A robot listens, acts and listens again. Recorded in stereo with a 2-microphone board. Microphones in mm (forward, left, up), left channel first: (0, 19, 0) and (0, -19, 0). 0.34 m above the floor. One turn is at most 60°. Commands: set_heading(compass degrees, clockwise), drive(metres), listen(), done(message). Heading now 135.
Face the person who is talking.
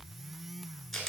listen()
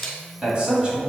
set_heading(160)
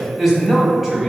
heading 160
done("Found it: a man speaking, straight ahead, 1 to 2 m away.")